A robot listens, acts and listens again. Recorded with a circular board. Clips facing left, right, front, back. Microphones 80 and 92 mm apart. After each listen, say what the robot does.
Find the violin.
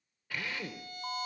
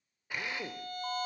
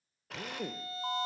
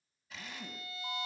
Turn 50° right.
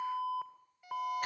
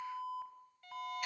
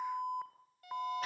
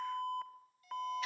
Turn 15° left.
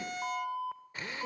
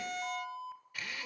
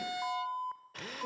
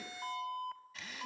Facing the violin, under 1 m away.